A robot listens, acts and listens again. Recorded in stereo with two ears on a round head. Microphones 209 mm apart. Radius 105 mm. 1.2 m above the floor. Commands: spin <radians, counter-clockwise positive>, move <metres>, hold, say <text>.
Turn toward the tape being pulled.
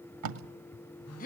spin -1.57
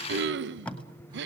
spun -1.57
say Facing the tape being pulled.